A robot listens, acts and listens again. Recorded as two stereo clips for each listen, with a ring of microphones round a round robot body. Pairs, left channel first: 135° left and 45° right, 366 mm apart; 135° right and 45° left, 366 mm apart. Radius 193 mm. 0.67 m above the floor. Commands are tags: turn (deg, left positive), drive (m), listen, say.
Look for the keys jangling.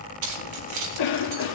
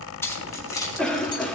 <turn deg="-55"/>
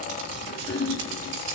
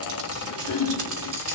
<listen/>
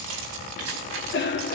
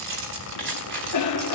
<turn deg="-15"/>
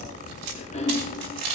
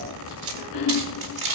<turn deg="-10"/>
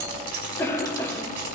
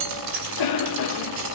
<say>Facing the keys jangling, over 4 m away.</say>